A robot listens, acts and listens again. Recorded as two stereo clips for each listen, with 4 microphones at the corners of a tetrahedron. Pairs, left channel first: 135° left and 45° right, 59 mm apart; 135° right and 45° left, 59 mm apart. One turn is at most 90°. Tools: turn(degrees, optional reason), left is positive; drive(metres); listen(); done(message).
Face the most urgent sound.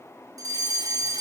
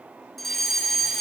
turn(degrees=-50, reason="The fire alarm: 50° right.")
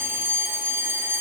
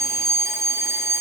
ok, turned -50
done("Found it: a fire alarm, straight ahead, over 4 m away.")